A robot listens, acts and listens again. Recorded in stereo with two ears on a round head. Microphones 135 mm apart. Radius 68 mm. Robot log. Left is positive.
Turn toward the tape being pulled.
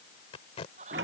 note: The tape being pulled: about 40° left or 140° left.
cmd yaw +40
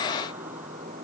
cmd idle
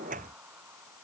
cmd idle
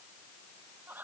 end: I heard tape being pulled, but can't make it out now. It was about straight ahead or 100° left.